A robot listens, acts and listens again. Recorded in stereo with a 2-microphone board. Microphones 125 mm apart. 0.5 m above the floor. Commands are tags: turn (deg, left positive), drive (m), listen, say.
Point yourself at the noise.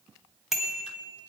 <turn deg="-30"/>
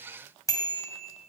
<turn deg="30"/>
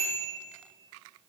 <say>Found it: a bicycle bell, straight ahead.</say>